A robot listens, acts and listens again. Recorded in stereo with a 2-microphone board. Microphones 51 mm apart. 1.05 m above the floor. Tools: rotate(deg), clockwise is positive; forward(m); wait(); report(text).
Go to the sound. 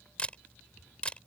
rotate(-20)
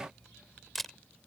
forward(1.0)
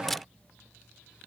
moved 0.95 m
forward(1.0)
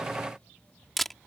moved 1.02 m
forward(1.0)
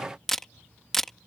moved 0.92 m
forward(1.0)
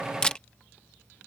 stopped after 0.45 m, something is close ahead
rotate(-20)
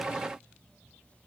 wait()
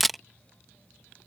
report("I am next to the camera shutter.")